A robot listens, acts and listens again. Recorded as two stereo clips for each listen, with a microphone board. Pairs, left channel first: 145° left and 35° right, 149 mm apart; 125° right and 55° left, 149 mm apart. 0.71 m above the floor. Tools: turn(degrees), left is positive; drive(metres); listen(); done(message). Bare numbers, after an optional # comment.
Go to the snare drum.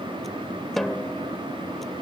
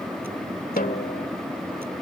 # The snare drum: 125° right.
turn(-125)
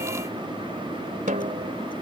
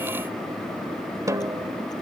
# The snare drum is now 10° right.
turn(-10)
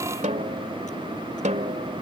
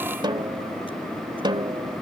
drive(1.0)
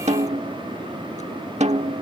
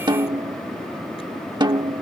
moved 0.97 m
drive(1.0)
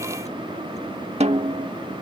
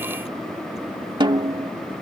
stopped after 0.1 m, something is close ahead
done("Arrived at the snare drum, straight ahead.")